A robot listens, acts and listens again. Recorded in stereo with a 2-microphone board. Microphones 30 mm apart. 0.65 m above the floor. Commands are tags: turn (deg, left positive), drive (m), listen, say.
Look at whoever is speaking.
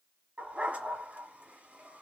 <listen/>
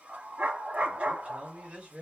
<turn deg="-55"/>
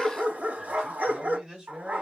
<turn deg="-25"/>
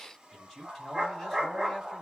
<turn deg="10"/>
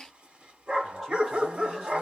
<listen/>
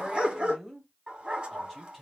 <say>Facing the man speaking, 2 to 4 m away.</say>